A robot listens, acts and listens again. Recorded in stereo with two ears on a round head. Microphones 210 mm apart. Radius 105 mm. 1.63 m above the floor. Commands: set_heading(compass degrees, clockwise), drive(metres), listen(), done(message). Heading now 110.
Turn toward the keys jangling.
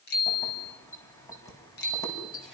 set_heading(80)
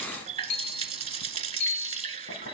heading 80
listen()
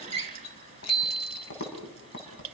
set_heading(310)
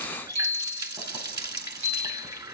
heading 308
listen()
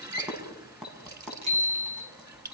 done("Found it: keys jangling, straight ahead.")